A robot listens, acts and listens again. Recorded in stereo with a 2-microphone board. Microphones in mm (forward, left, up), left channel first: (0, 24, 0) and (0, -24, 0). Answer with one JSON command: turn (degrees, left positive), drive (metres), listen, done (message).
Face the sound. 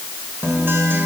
{"turn": -55}
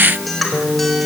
{"done": "Found it: a guitar, straight ahead."}